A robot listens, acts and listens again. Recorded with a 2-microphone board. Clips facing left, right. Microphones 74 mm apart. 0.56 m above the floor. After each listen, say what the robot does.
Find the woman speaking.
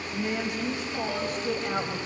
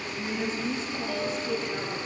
Turn 75° left.
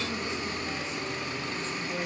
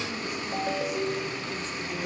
Turn 35° left.
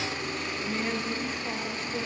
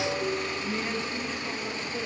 Turn 10° left.
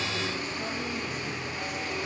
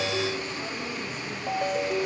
Keep listening.
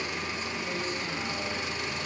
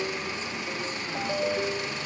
Keep listening.
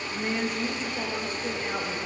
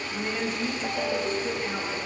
Found it: a woman speaking, straight ahead.